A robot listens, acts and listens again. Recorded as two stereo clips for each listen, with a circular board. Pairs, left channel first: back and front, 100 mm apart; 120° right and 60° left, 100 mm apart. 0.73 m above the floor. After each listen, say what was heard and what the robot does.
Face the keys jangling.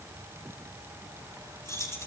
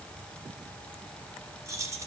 The keys jangling: 120° left. Turn 120° left.
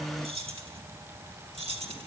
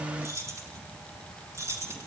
Facing the keys jangling, over 4 m away.